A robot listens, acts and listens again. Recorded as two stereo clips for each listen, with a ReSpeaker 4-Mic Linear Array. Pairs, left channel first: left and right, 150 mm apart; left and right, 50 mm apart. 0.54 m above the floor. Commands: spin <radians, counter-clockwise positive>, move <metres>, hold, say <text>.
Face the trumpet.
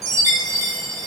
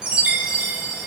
hold
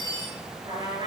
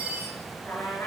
spin 0.87
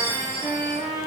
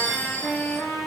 spin 1.40
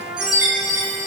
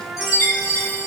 say Facing the trumpet, 2 to 4 m away.